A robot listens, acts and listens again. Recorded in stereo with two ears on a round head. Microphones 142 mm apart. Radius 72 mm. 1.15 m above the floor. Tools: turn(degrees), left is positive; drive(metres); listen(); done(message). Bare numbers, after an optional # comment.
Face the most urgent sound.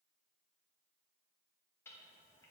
listen()
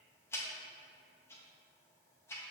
listen()
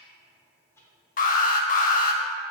# The alarm: about 55° left or 125° left.
turn(55)
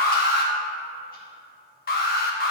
# So it is at 65° left.
turn(65)
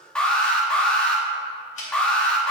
done("Found it: an alarm, straight ahead, 1 to 2 m away.")